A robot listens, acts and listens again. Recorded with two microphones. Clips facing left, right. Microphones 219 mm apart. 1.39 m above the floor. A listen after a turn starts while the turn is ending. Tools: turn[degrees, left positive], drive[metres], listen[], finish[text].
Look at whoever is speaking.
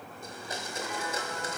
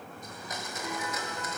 Action: listen[]
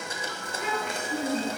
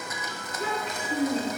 Thought: The child speaking: about 30° right or 150° right.
Action: turn[-30]
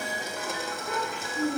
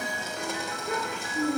Thought: The child speaking: about 40° right or 140° right.
Action: turn[-40]
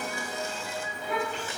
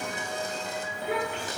Thought: So it is at 110° right.
Action: turn[-110]
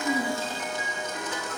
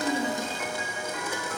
Action: listen[]
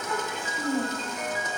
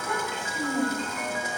Thought: The child speaking is now 15° left.
Action: turn[15]
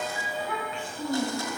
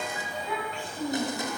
Action: finish[Facing the child speaking, 2 to 4 m away.]